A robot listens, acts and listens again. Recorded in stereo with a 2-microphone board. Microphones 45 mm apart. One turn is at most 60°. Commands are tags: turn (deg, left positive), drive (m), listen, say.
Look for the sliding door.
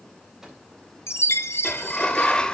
<turn deg="20"/>
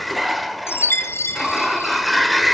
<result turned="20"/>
<say>Found it: a sliding door, straight ahead, 1 to 2 m away.</say>